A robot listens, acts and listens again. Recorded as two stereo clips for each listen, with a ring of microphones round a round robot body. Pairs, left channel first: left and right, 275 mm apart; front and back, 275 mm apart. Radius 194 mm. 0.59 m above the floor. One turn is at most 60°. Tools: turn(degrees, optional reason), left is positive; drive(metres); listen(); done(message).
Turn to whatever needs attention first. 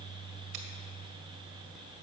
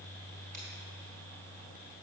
listen()
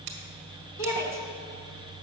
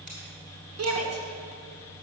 turn(degrees=60, reason="The shout: 155° left.")
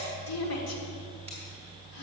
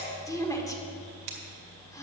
turn(degrees=60, reason="The shout is now 80° left.")
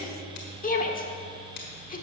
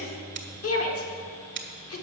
turn(degrees=30, reason="The shout is now 30° left.")
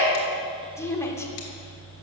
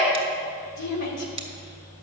turn(degrees=10, reason="The shout is now 10° left.")
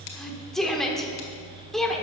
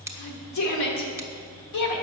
done("Found it: a shout, straight ahead, 1 to 2 m away.")